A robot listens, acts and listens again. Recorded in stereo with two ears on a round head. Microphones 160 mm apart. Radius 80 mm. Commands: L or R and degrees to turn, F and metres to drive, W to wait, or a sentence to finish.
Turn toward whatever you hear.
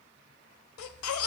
L90
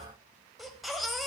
Facing the baby crying.